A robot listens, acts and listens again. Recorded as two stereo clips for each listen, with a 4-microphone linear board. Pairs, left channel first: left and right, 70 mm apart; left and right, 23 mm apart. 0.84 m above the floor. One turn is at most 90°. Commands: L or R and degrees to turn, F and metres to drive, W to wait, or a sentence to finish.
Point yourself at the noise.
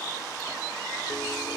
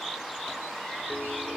W
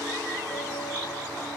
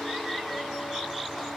W
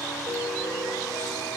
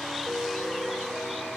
L90
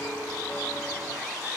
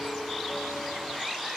W
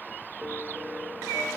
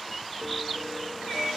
Facing the piano.